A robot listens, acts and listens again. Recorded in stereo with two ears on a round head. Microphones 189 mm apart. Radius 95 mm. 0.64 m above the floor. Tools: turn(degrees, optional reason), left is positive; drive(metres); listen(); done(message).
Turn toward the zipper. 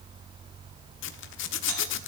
turn(degrees=60, reason="The zipper: about 60° left or 120° left.")
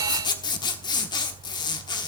turn(degrees=25, reason="So it is at 25° left.")
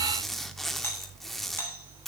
done("Facing the zipper, 1 to 2 m away.")